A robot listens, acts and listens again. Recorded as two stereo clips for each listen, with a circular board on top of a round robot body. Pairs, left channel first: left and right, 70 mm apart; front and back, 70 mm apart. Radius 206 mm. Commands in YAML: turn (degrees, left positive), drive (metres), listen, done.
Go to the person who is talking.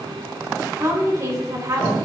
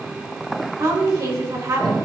turn: -135
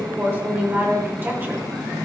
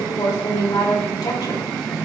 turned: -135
turn: -30
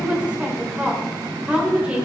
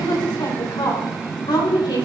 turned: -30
turn: -20
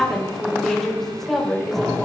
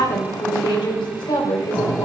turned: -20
drive: 1.0
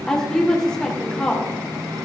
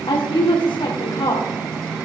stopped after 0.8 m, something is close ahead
done: "Something is in my way. I am facing the woman speaking but have not reached it."